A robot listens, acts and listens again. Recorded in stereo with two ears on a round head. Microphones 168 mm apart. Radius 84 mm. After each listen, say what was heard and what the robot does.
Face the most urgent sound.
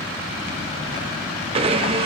Keep listening.
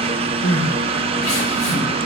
Turn 90° left.
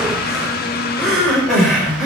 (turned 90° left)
Found it: crying, straight ahead, over 4 m away.